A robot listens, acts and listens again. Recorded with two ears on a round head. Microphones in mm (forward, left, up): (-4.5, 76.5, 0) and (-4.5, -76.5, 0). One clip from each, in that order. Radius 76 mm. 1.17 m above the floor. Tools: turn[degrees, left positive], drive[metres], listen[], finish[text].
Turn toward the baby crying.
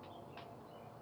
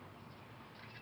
Action: listen[]
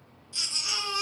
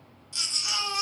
Thought: The baby crying: about 20° right or 160° right.
Action: turn[-20]
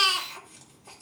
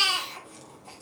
Action: finish[Facing the baby crying, 2 to 4 m away.]